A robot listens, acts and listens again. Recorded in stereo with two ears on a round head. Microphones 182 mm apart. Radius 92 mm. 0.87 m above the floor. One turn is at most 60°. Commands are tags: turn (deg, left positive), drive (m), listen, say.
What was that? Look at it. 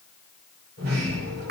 <turn deg="-50"/>
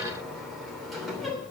<say>Found it: a sliding door, straight ahead.</say>